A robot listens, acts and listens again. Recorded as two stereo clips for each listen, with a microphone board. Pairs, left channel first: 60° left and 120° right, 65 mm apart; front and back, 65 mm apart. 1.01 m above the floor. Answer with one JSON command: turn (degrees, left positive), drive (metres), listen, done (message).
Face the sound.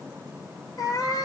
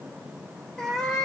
{"turn": 85}
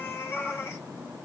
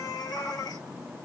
{"turn": 15}
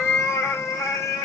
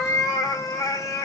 {"turn": 25}
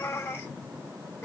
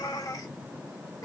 {"turn": 20}
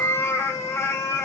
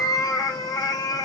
{"turn": 10}
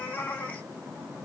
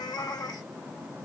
{"done": "Facing the cat meowing."}